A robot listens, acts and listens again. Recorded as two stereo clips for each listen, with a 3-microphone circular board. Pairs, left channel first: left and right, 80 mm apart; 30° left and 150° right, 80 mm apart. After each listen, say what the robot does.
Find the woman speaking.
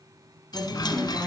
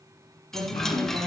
Turn 175° left.
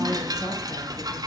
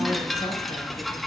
Keep listening.
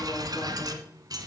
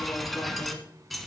Keep listening.
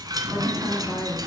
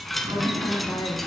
Turn 65° left.
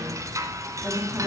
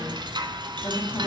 Turn 15° right.
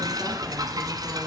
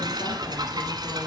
Keep listening.
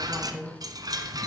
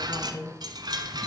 Found it: a woman speaking, straight ahead, 2 to 4 m away.